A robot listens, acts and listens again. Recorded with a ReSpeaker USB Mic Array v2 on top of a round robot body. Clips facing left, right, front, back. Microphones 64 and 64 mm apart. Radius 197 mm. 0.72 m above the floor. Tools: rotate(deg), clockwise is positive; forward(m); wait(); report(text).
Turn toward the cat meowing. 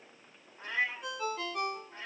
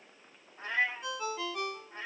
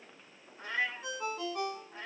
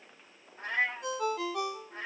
rotate(150)
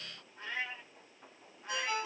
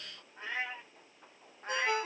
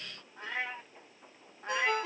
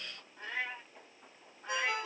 rotate(40)
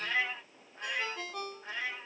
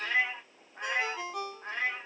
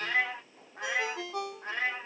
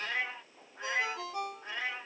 rotate(45)
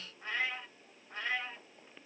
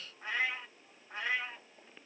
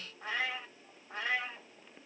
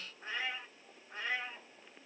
rotate(10)
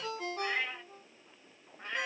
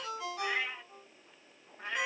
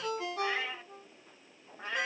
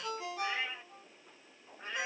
report("Facing the cat meowing.")